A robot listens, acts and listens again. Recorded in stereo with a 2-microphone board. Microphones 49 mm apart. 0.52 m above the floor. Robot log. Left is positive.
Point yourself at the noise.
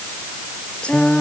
note: The singing: about 20° left or 160° left.
cmd yaw +20
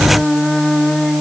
end: Found it: singing, straight ahead.